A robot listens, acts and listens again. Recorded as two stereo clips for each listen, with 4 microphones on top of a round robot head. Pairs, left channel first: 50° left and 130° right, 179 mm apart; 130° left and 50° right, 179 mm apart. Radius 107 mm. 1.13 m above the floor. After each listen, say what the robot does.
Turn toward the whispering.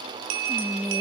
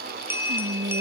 Turn 50° right.
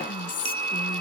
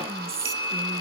Facing the whispering.